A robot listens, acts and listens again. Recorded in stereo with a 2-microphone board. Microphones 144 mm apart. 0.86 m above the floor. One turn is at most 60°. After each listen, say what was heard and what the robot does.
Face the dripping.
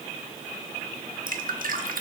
Turn 60° right.
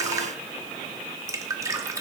So it is at 20° right. Turn 20° right.
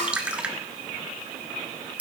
The dripping is now 10° right. Turn 10° right.
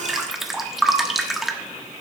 Facing the dripping, 1 to 2 m away.